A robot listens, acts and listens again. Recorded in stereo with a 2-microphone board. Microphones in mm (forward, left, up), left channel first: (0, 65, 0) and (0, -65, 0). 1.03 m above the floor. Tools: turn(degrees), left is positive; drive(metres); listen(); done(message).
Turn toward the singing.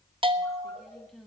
turn(degrees=30)
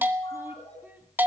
listen()
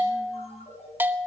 listen()
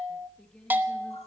turn(degrees=30)
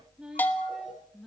turn(degrees=30)
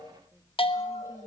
listen()
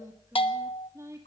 turn(degrees=-25)
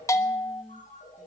done("Facing the singing.")